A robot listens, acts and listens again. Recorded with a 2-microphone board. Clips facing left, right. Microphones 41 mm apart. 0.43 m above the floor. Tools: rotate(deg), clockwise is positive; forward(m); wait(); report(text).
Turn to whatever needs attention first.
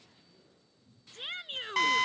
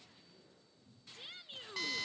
rotate(-55)
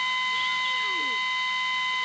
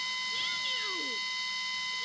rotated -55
wait()
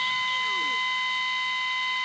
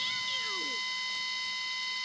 wait()
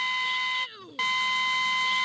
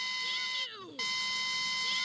report("Facing the shout.")